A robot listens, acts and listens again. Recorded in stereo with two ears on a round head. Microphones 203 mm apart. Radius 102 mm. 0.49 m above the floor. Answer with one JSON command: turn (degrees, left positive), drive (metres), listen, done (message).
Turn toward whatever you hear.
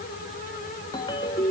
{"turn": 20}
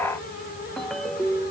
{"done": "Found it: a ringtone, straight ahead."}